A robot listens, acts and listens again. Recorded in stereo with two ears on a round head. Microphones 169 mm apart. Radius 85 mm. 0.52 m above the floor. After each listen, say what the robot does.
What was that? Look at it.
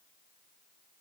Keep listening.
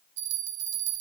Turn 65° right.
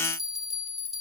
Facing the bell.